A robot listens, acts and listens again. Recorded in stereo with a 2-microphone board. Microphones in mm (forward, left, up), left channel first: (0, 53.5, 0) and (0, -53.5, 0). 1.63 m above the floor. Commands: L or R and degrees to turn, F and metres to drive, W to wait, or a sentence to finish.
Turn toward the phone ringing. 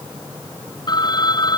L45
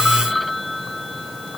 Facing the phone ringing.